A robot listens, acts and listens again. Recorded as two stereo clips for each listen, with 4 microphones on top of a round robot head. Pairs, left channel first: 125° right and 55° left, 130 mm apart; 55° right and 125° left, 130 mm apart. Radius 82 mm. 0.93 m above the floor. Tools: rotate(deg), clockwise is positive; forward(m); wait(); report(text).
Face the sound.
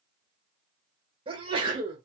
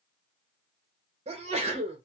rotate(-95)
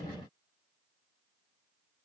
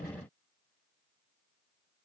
report("Facing where the sneeze came from. I can't hear it now.")